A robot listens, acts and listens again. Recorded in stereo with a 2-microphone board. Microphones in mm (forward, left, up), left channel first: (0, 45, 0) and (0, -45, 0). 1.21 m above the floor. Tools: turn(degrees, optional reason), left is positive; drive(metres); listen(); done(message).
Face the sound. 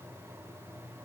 listen()
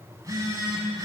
turn(degrees=-40, reason="The phone buzzing: about 40° right or 140° right.")
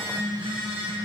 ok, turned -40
turn(degrees=-95, reason="So it is at 95° right.")
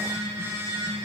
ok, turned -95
turn(degrees=-35, reason="The phone buzzing is now 35° right.")
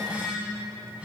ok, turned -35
turn(degrees=-15, reason="The phone buzzing is now 15° right.")
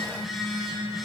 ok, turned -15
done("Found it: a phone buzzing, straight ahead.")